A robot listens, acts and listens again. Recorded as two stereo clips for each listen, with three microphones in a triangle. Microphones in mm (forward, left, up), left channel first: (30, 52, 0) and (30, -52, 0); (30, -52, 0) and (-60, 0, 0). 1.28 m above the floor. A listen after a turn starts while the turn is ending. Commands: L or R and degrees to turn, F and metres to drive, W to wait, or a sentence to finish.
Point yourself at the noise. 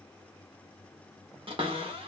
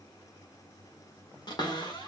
R70
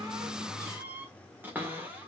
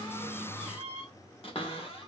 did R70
R20
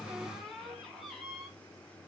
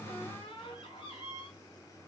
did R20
Facing the cupboard door.